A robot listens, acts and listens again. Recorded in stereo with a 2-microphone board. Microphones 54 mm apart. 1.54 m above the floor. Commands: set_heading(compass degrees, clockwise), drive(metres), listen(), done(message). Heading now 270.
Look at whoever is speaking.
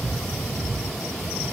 listen()
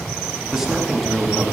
set_heading(300)
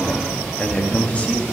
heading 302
set_heading(277)
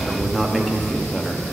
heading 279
done("Facing the man speaking, under 1 m away.")